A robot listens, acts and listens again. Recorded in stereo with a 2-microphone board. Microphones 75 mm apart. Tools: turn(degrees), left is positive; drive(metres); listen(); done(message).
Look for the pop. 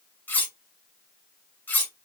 listen()
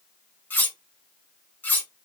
listen()
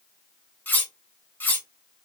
done("I can't make out a pop, only cutlery clinking.")